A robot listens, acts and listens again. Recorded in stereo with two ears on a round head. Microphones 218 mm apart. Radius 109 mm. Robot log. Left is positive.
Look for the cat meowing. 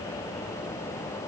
cmd idle
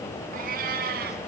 note: The cat meowing: about 40° right or 140° right.
cmd yaw -40
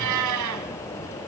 note: So it is at 100° right.
cmd yaw -100
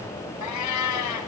note: The cat meowing is now 80° left.
cmd yaw +80
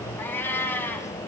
note: The cat meowing is now 10° left.
cmd yaw +10
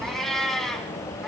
end: Facing the cat meowing, 2 to 4 m away.